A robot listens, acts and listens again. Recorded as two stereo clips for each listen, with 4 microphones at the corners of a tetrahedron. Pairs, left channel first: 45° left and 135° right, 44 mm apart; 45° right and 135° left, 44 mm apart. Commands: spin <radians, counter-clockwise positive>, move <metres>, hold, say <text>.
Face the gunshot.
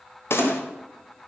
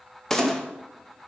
spin 0.61
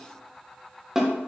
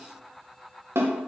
say Facing where the gunshot came from. I can't hear it now.